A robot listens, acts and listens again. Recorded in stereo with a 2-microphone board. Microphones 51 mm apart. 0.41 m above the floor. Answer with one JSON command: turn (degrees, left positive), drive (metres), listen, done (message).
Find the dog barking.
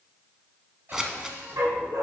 {"turn": -90}
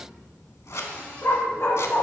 {"turn": 60}
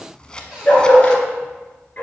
{"turn": 30}
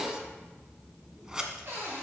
{"listen": true}
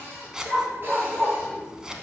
{"done": "Found it: a dog barking, straight ahead, 1 to 2 m away."}